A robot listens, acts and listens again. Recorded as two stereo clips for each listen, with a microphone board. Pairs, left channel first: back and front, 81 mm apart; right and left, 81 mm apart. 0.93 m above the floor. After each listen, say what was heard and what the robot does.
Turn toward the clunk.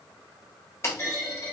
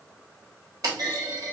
The clunk: 120° left. Turn 120° left.
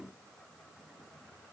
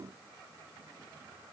I heard a clunk from this way, but can't make it out now.